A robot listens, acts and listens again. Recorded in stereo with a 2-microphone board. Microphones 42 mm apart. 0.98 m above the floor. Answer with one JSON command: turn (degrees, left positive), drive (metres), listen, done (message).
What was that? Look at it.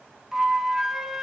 {"turn": -30}
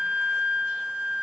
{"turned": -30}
{"turn": -140}
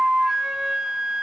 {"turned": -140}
{"turn": -10}
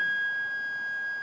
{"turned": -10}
{"done": "Found it: a flute, straight ahead, 1 to 2 m away."}